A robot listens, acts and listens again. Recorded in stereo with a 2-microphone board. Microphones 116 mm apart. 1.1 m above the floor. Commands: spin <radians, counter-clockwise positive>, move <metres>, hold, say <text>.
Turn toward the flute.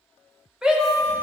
spin 0.35
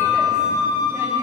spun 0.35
spin 2.44
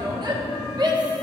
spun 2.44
hold
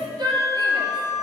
spin 0.52
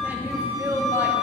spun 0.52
say Facing the flute.